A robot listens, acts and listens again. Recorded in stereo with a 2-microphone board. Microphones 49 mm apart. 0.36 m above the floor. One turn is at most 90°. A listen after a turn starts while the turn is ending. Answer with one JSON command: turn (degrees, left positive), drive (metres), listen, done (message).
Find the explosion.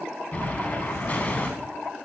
{"turn": 30}
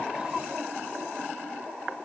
{"listen": true}
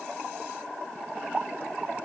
{"done": "I heard an explosion, but can't make it out now. It was about straight ahead or 120° left."}